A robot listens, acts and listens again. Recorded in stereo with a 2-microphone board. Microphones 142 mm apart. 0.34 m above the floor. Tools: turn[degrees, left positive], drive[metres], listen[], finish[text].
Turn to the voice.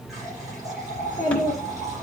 Thought: The child speaking: about 20° left or 160° left.
Action: turn[20]
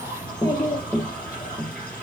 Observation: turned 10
Thought: The child speaking: about 25° left or 155° left.
Action: turn[25]
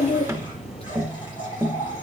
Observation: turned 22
Thought: So it is at 135° left.
Action: turn[135]
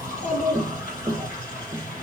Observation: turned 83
Thought: The child speaking is now 55° left.
Action: turn[55]
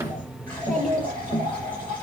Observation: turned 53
Action: finish[Found it: a child speaking, straight ahead, over 4 m away.]